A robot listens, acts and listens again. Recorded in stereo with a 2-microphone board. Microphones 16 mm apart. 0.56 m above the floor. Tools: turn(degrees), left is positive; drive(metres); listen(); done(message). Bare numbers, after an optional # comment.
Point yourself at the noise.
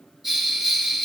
# The bell: about 15° right or 165° right.
turn(-15)
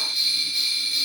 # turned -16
# So it is at 150° right.
turn(-150)
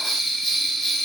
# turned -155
done("Found it: a bell, straight ahead, 2 to 4 m away.")